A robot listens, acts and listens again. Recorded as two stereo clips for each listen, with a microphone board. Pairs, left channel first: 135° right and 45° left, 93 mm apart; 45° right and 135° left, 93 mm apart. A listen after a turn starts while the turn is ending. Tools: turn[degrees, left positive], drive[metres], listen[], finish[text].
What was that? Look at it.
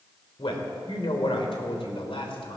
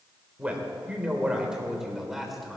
Thought: The man speaking: 135° right.
Action: turn[-135]
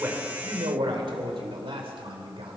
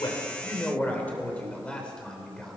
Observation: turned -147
Thought: The man speaking is now 40° left.
Action: turn[40]
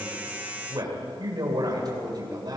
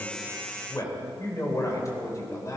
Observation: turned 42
Action: finish[Facing the man speaking.]